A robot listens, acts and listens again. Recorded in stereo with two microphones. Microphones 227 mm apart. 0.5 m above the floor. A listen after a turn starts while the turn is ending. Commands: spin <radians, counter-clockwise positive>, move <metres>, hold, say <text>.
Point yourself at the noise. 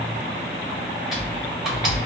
spin 0.52
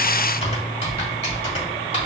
spin 2.62
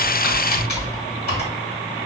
spin 0.87
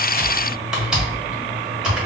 say Facing the typing on a keyboard.